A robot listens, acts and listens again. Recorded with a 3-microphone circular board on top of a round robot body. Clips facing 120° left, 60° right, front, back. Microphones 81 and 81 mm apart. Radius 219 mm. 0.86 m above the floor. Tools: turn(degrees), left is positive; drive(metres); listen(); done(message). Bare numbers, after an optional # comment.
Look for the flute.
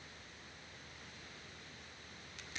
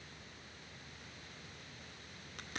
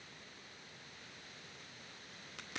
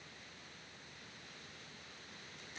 listen()
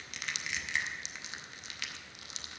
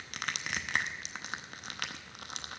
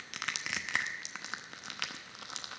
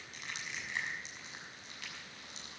listen()
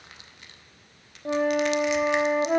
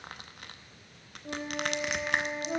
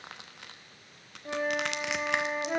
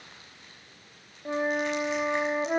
# The flute: 110° left.
turn(110)
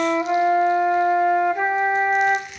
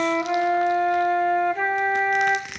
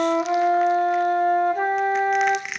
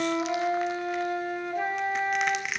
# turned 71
# The flute is now 40° left.
turn(40)
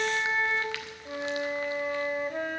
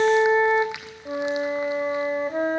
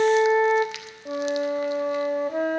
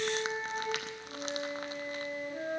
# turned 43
done("Found it: a flute, straight ahead, under 1 m away.")